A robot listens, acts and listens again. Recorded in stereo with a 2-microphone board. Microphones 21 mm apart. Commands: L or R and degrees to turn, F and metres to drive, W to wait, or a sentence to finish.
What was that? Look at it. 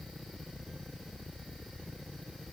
W
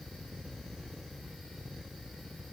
W
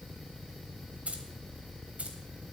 R90
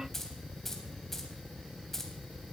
L10
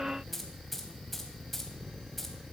Found it: keys jangling, straight ahead, 2 to 4 m away.